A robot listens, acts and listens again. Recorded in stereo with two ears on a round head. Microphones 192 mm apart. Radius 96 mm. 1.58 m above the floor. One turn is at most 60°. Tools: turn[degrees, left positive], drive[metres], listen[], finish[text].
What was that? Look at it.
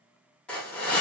Action: turn[30]
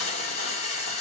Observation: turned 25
Thought: So it is at 150° left.
Action: turn[60]
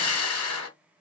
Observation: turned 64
Thought: The hiss is now 85° left.
Action: turn[60]
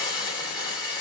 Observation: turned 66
Thought: The hiss is now 20° left.
Action: turn[20]
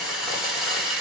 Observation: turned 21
Action: finish[Found it: a hiss, straight ahead, 1 to 2 m away.]